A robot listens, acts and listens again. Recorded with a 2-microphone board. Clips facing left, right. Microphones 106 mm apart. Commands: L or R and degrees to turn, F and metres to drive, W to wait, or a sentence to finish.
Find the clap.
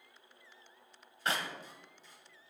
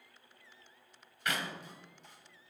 L30
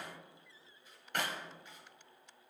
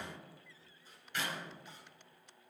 L115
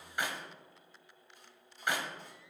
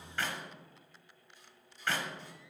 L15
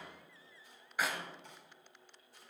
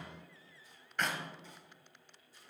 Found it: a clap, straight ahead, 1 to 2 m away.